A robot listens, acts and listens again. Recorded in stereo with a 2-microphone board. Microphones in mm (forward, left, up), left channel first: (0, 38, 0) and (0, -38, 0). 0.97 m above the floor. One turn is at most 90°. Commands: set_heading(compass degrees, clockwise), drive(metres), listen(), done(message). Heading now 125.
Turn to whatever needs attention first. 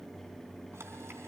listen()
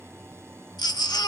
set_heading(60)
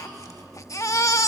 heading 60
set_heading(10)
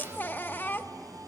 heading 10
set_heading(345)
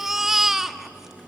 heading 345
done("Found it: a baby crying, straight ahead, under 1 m away.")